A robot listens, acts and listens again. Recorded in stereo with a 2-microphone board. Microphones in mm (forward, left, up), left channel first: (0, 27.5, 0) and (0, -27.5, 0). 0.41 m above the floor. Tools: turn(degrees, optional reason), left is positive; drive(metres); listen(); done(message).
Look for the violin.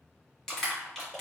listen()
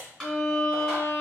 turn(degrees=65, reason="The violin: about 65° left or 115° left.")
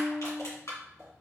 turn(degrees=40, reason="So it is at 40° left.")
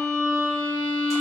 turn(degrees=25, reason="The violin is now 25° left.")
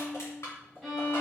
done("Facing the violin.")